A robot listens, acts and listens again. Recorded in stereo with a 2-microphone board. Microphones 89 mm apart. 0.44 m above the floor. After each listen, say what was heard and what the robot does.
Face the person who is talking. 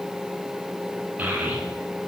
The child speaking: about 15° right or 165° right. Turn 15° right.
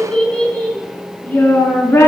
So it is at 25° left. Turn 25° left.
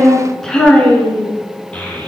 The child speaking is now 15° left. Turn 15° left.
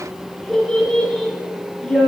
Facing the child speaking, over 4 m away.